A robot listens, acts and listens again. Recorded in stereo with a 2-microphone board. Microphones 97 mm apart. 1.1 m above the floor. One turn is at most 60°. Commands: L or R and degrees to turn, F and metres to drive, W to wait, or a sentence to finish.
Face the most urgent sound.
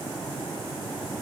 W
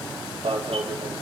R60
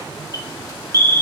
R35
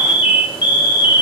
R20
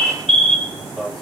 Found it: an alarm, straight ahead.